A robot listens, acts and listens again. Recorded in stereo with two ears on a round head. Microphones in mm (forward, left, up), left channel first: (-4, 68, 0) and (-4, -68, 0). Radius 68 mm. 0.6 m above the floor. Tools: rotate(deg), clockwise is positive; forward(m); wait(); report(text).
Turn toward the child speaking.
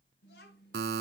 rotate(-70)
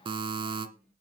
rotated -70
wait()
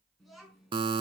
report("Found it: a child speaking, straight ahead.")